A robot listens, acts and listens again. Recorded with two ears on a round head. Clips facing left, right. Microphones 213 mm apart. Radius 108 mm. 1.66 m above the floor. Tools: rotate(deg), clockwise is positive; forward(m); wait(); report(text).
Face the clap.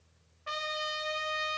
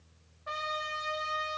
wait()
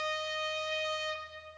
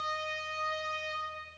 wait()
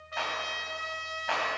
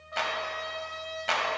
rotate(40)
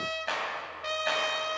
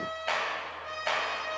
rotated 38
report("Found it: a clap, straight ahead, 2 to 4 m away.")